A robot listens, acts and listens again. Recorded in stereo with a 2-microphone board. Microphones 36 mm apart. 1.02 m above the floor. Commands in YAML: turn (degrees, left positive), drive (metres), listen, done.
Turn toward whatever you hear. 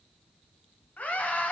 turn: 45
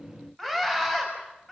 done: "Found it: a scream, straight ahead, over 4 m away."